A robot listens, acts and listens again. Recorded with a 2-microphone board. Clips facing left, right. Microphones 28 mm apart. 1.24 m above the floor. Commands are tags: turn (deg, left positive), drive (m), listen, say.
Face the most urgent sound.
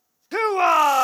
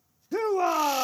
<turn deg="75"/>
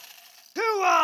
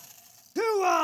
<turn deg="30"/>
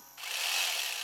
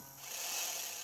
<listen/>
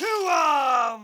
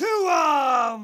<say>Facing the shout.</say>